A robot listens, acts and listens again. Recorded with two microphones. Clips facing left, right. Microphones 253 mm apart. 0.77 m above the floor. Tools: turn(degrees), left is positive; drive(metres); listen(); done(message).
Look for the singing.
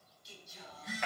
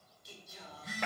turn(degrees=-65)
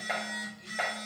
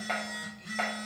listen()
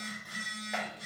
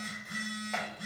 listen()
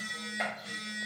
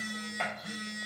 done("I heard singing, but can't make it out now. It was about straight ahead or 50° right.")